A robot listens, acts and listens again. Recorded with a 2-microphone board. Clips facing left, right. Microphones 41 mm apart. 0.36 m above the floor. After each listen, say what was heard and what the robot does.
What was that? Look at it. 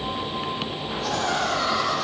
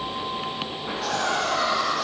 The laughter: about 75° right or 105° right. Turn 75° right.
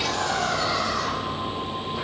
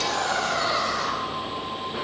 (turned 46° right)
So it is at 45° right. Turn 45° right.
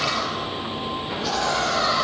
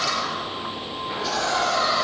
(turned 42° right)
Found it: laughter, straight ahead.